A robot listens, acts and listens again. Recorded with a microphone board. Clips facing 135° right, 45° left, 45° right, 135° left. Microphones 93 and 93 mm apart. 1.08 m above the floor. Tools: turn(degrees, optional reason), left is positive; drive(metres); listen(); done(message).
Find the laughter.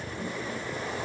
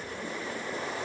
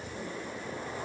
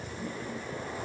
listen()
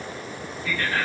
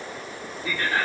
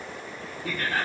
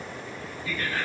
turn(degrees=-25, reason="The laughter: 25° right.")
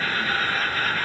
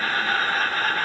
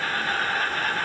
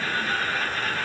turn(degrees=-10, reason="The laughter is now 10° right.")
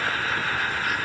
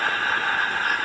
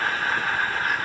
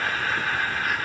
done("Found it: laughter, straight ahead, 1 to 2 m away.")